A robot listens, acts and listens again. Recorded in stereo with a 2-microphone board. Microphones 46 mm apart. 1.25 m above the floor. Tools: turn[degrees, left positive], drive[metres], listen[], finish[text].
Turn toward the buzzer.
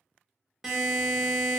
Action: turn[30]
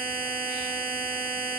Thought: So it is at 150° left.
Action: turn[150]
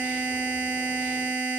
Thought: The buzzer is now 10° left.
Action: turn[10]
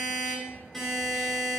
Action: finish[Facing the buzzer.]